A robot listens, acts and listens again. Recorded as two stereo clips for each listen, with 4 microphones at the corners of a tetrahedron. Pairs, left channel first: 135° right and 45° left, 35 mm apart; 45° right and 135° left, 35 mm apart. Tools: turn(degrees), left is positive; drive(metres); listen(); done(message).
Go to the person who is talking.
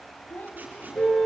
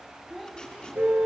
turn(degrees=-130)
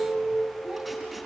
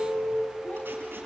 listen()
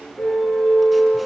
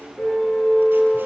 listen()
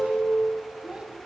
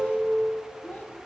turn(degrees=-15)
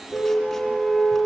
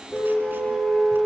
listen()
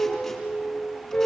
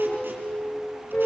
listen()
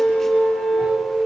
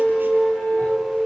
done("I heard a child speaking from this way, but can't make it out now. I did not reach it.")